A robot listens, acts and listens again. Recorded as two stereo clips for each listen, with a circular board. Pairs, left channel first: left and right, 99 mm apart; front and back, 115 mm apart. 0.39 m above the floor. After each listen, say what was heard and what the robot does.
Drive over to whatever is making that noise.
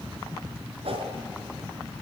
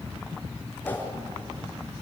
The whoosh: 75° right. Turn 75° right.
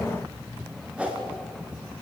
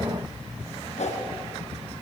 The whoosh is now 10° right. Turn 10° right.
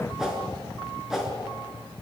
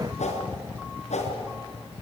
Drive 1.0 m forward.
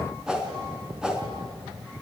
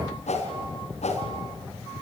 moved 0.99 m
Drive 1.0 m forward.
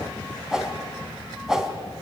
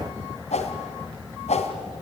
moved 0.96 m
Drive 1.0 m forward.
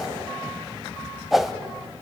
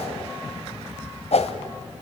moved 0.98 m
Drive 1.0 m forward.
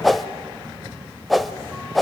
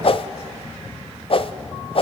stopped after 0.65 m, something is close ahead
I am next to the whoosh.